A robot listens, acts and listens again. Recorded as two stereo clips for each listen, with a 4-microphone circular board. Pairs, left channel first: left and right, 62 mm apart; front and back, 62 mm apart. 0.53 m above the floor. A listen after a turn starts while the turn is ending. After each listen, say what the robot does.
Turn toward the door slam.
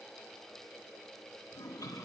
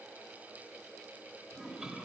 Keep listening.
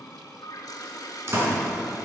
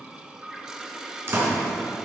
Turn 135° right.
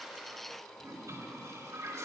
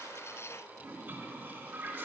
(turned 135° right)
Facing where the door slam came from. I can't hear it now.